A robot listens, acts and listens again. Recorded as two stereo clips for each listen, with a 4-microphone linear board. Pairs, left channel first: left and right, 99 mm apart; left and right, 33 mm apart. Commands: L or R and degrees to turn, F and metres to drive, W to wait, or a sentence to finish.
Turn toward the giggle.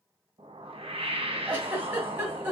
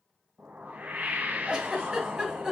R25
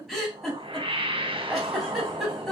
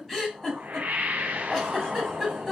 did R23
Found it: a giggle, straight ahead.